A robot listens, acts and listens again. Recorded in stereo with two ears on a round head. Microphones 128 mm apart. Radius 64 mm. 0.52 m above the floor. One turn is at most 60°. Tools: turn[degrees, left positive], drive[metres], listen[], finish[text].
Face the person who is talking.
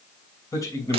Thought: The man speaking: about 20° left or 160° left.
Action: turn[20]
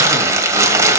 Action: listen[]
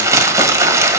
Action: listen[]
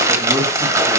Action: finish[I heard a man speaking, but can't make it out now. It was about straight ahead or 140° left.]